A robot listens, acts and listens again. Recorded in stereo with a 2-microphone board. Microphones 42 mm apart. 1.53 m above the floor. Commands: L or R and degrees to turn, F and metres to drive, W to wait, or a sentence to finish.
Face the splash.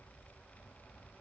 W
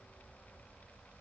W
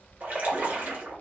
R45
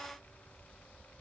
W
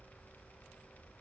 I heard a splash, but can't make it out now. It was about straight ahead or 90° right.